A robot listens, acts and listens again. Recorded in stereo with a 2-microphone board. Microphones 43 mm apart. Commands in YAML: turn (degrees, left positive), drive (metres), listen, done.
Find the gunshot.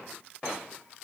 listen: true
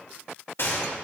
turn: 65
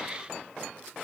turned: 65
listen: true
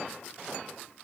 done: "I heard a gunshot, but can't make it out now. It was about straight ahead or 50° left."